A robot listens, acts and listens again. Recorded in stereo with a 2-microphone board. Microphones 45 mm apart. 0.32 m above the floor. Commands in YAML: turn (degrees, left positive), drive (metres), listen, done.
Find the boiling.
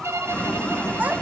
turn: 25
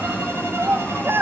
turn: 125
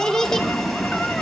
done: "Found it: boiling, straight ahead."